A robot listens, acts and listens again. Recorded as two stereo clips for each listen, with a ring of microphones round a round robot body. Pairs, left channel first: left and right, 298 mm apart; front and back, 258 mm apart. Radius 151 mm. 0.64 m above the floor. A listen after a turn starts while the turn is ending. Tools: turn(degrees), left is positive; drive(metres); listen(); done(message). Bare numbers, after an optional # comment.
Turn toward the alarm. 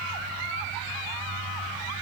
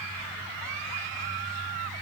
listen()
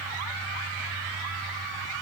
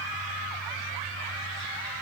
listen()
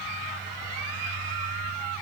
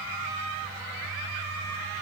done("I can't make out an alarm.")